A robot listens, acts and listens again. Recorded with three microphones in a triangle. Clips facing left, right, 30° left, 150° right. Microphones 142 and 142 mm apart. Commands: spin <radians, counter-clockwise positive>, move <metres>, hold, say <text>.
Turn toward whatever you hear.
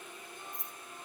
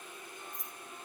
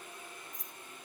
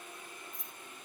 spin 1.22
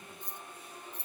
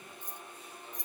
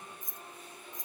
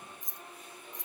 spin -0.26
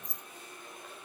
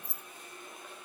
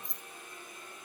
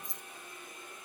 say Found it: keys jangling, straight ahead.